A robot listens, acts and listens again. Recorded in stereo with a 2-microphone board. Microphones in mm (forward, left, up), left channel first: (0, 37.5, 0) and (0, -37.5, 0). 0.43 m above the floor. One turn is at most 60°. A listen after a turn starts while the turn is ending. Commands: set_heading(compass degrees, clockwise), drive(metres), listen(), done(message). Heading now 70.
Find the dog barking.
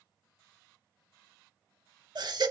listen()
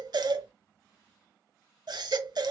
listen()
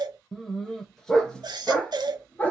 set_heading(50)
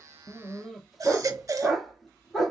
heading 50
set_heading(20)
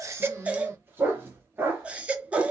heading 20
set_heading(50)
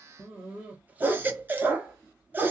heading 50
set_heading(70)
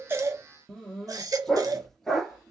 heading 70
done("Found it: a dog barking, straight ahead, 1 to 2 m away.")